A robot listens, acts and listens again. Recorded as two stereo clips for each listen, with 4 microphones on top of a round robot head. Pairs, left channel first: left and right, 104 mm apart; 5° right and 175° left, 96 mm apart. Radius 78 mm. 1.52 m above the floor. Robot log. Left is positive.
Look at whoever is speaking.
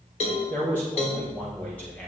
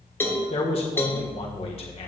note: The man speaking: 10° left.
cmd yaw +10
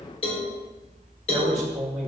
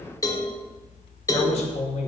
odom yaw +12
end: Found it: a man speaking, straight ahead, 1 to 2 m away.